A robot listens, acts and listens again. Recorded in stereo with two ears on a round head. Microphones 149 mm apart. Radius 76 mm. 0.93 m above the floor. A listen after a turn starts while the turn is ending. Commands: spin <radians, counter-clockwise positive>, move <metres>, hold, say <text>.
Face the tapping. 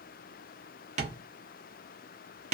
spin -0.79
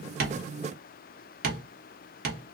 spin -1.40
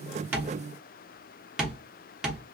say Facing the tapping.